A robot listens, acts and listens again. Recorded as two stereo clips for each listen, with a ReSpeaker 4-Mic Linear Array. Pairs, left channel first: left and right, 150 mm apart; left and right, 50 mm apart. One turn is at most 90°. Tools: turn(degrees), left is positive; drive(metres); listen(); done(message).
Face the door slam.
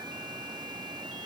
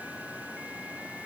listen()
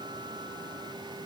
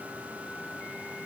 listen()
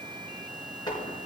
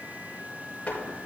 turn(degrees=30)
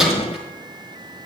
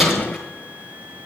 done("Found it: a door slam, straight ahead.")